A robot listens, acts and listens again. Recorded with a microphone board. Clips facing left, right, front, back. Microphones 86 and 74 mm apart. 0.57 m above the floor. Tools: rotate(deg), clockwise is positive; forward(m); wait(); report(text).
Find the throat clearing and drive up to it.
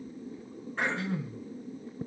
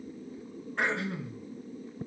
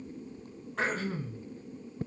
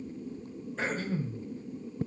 forward(1.0)
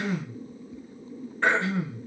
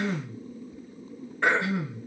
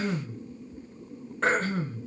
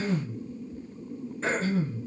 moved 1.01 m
rotate(10)
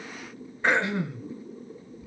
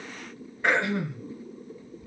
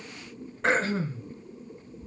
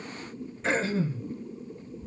forward(1.0)
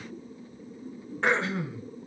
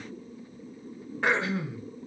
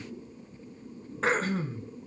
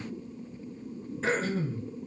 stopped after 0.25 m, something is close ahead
report("Arrived at the throat clearing, straight ahead.")